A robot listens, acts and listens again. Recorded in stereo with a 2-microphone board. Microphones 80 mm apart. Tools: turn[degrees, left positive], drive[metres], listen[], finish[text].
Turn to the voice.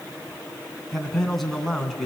Action: turn[30]
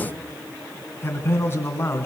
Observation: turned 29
Thought: So it is at 150° left.
Action: turn[150]
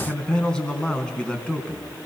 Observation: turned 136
Thought: The man speaking is now 10° left.
Action: turn[10]
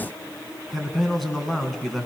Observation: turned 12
Action: finish[Facing the man speaking, 2 to 4 m away.]